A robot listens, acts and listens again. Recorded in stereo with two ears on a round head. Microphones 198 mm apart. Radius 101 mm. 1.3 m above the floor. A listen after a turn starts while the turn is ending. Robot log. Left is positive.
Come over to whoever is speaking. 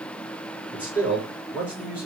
cmd yaw -30
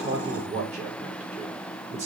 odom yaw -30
note: So it is at 145° right.
cmd yaw -145
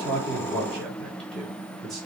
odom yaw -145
cmd fwd 1.0
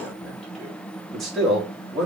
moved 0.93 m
cmd fwd 1.0
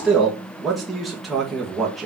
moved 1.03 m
cmd fwd 1.0
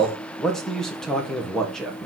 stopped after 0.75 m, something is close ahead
end: I am next to the man speaking.